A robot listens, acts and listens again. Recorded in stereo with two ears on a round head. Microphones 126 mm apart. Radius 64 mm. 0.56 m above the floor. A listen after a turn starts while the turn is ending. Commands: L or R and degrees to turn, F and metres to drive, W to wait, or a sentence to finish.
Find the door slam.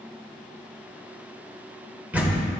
R30
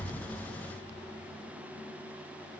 W
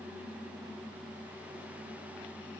I heard a door slam, but can't make it out now. It was about 20° left or 140° right.